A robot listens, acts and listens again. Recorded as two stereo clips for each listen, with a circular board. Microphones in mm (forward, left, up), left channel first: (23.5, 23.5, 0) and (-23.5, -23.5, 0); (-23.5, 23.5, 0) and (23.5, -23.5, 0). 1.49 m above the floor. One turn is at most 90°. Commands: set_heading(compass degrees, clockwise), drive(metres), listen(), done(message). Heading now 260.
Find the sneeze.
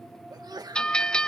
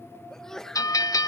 set_heading(350)
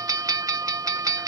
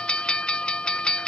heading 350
set_heading(45)
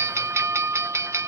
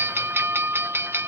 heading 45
done("Facing where the sneeze came from. I can't hear it now.")